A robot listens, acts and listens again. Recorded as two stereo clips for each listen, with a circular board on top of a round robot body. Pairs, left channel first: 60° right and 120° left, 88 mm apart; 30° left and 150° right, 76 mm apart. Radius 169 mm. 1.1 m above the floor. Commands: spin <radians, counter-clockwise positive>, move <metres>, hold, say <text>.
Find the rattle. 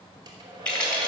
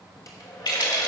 spin 0.35
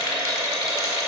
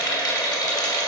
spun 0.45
say Found it: a rattle, straight ahead, 2 to 4 m away.